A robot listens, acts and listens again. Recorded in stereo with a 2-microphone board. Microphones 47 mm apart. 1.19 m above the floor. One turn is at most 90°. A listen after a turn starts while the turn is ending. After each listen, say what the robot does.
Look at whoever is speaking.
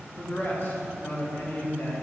Turn 50° left.
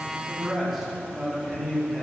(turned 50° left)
Found it: a man speaking, straight ahead.